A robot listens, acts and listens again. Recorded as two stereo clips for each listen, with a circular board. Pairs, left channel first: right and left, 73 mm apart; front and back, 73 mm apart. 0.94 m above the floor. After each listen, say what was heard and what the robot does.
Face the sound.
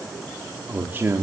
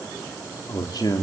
The man speaking: 30° left. Turn 30° left.
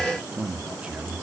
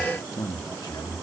The man speaking is now 25° left. Turn 25° left.
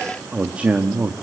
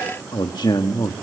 The man speaking is now 25° left. Turn 25° left.
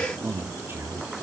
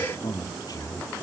The man speaking is now 35° left. Turn 35° left.
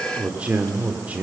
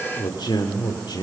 The man speaking is now 20° left. Turn 20° left.
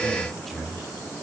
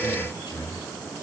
Facing the man speaking, 2 to 4 m away.